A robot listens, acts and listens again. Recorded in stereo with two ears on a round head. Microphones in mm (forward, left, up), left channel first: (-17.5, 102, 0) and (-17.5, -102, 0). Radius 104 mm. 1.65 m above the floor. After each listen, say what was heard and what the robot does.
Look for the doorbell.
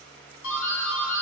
The doorbell: about 60° left or 120° left. Turn 60° left.
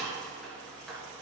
Found it: a doorbell, straight ahead, 1 to 2 m away.